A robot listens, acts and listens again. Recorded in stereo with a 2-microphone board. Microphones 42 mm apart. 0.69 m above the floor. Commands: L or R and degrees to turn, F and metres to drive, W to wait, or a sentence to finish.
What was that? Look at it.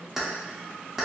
R30
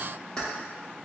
L20
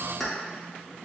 Found it: keys jangling, straight ahead, under 1 m away.